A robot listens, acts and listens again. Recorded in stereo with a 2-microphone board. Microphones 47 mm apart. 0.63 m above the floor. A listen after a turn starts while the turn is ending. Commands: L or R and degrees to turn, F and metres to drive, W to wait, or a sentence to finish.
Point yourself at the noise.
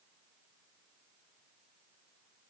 W
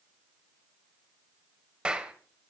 R20
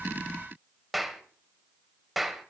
Facing the clap, 2 to 4 m away.